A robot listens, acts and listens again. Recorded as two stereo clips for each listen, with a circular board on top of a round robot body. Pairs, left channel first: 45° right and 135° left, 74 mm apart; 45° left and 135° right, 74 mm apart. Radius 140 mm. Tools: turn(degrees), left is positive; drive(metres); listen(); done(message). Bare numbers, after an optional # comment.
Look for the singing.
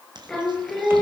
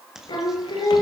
# The singing: 40° left.
turn(40)
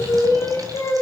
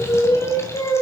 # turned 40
done("Found it: singing, straight ahead.")